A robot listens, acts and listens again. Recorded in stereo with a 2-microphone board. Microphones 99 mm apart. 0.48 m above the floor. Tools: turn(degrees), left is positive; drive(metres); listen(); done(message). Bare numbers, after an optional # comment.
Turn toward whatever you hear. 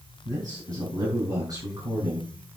# The man speaking: about 35° right or 145° right.
turn(-35)
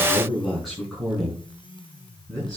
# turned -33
done("Facing the man speaking.")